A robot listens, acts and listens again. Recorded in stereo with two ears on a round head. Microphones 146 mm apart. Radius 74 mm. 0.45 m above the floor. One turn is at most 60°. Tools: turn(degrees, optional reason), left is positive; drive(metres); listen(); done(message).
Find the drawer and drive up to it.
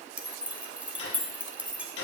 turn(degrees=60, reason="The drawer: about 75° left or 105° left.")
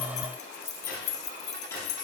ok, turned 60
turn(degrees=15, reason="So it is at 15° left.")
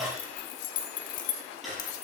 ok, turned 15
drive(metres=1.0)
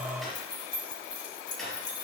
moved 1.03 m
drive(metres=1.0)
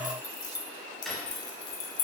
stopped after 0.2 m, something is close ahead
done("Blocked. The drawer is further on, straight ahead.")